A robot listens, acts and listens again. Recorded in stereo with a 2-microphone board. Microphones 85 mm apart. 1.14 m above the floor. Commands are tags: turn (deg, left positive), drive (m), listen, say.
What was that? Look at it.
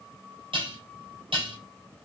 <turn deg="-70"/>
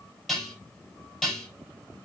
<say>Found it: dishes clattering, straight ahead.</say>